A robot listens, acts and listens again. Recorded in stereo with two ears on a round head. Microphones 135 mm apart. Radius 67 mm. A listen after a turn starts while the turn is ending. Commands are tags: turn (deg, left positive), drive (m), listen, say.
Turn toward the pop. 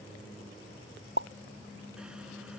<turn deg="-90"/>
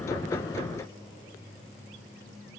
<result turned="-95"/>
<say>I heard a pop from this way, but can't make it out now.</say>